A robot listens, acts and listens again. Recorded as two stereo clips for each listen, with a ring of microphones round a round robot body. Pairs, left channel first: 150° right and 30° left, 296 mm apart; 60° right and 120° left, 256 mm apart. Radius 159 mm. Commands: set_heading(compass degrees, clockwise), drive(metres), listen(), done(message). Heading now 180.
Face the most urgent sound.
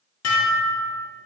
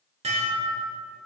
listen()
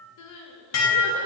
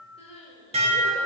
set_heading(310)
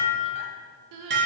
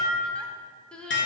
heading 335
set_heading(310)
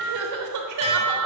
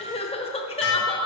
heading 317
set_heading(307)
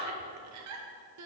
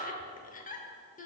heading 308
done("Found it: crying, straight ahead.")